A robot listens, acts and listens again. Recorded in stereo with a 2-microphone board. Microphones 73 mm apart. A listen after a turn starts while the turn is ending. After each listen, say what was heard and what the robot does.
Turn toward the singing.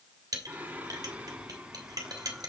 Turn 30° right.
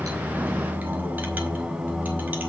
Turn 30° right.
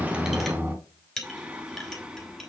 Turn 30° right.
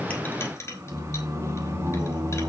So it is at 145° right. Turn 145° right.
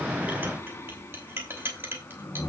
The singing is now 30° left. Turn 30° left.
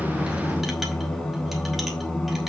Found it: singing, straight ahead, 1 to 2 m away.